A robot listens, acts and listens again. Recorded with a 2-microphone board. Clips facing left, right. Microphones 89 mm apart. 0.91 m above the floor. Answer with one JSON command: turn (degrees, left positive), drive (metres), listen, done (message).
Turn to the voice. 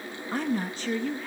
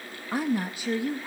{"turn": -30}
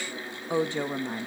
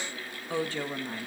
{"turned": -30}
{"turn": 20}
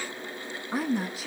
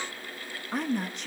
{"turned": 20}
{"done": "Facing the woman speaking, under 1 m away."}